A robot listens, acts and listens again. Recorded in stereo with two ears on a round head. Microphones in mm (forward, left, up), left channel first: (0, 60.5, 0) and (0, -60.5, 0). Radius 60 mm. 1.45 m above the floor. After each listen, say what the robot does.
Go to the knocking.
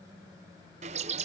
Keep listening.
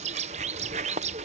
Keep listening.
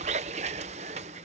I can't make out knocking to turn to.